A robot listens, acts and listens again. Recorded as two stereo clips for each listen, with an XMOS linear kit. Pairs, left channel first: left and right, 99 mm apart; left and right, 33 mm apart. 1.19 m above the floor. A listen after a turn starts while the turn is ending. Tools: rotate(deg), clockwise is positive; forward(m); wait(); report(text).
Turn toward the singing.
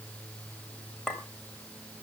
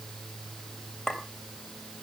wait()
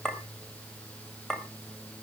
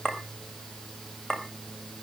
wait()
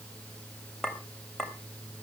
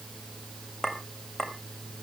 report("I can't make out singing to turn to.")